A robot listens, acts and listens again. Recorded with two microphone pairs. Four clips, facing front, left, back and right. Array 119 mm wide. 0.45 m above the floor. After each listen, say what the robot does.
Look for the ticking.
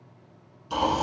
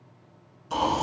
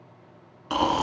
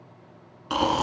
Keep listening.
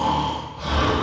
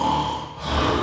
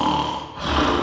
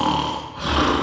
Keep listening.
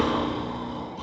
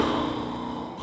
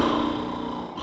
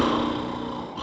I can't make out ticking to turn to.